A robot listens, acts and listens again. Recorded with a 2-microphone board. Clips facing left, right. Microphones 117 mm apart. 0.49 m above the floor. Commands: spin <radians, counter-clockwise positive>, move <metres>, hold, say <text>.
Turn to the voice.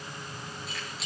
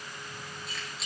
hold
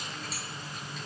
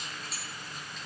hold
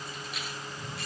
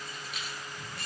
say I can't make out anyone speaking, only keys jangling.